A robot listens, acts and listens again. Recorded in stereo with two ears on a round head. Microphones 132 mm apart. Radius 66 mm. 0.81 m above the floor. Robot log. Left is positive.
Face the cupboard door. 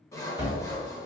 note: The cupboard door: about 20° right or 160° right.
cmd yaw -20
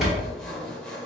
end: Facing the cupboard door, 1 to 2 m away.